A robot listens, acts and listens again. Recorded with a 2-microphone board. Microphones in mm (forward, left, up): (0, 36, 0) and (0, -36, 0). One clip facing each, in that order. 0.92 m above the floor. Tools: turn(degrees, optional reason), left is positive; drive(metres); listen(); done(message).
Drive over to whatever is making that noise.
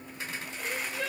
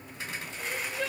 turn(degrees=30)
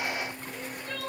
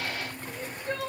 turn(degrees=-30, reason="So it is at 30° right.")
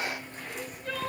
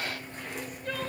drive(metres=1.0)
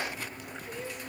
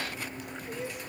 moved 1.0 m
drive(metres=1.0)
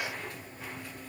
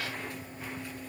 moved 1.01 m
listen()
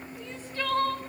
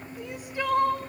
turn(degrees=-15, reason="The crying is now 15° right.")
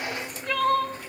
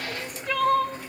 drive(metres=1.0)
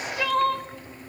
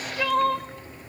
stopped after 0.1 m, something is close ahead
done("Arrived at the crying, straight ahead.")